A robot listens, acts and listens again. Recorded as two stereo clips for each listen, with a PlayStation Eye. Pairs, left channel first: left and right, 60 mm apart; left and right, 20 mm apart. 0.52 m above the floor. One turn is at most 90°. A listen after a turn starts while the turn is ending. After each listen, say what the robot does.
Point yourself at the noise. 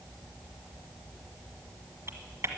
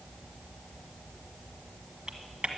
Turn 50° right.
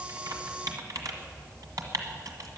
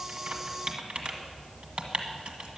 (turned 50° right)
Turn 80° right.
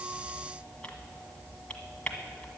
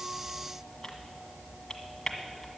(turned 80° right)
Turn 20° left.
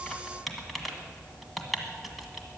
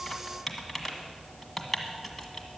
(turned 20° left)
Found it: typing on a keyboard, straight ahead.